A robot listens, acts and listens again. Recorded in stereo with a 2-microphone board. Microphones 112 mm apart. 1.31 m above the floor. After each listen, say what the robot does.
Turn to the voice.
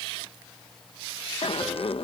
Keep listening.
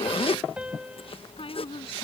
Turn 60° left.
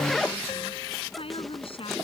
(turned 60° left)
Turn 60° left.
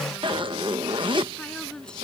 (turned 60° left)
Facing the woman speaking.